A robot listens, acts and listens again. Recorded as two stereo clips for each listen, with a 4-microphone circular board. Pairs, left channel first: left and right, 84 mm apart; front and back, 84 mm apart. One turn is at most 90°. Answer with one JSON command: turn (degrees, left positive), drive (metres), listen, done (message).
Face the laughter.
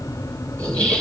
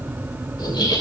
{"turn": 10}
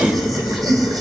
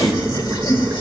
{"done": "Facing the laughter."}